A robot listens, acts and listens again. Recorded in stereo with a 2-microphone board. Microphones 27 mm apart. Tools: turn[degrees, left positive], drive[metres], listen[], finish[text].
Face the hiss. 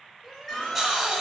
Action: turn[-30]
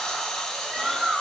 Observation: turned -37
Thought: So it is at 30° left.
Action: turn[30]
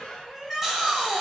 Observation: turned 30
Action: finish[Facing the hiss.]